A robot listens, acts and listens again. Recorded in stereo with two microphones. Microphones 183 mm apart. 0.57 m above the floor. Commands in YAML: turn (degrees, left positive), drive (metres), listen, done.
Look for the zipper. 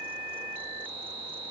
listen: true
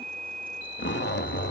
turn: 90
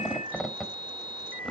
done: "Found it: a zipper, straight ahead, under 1 m away."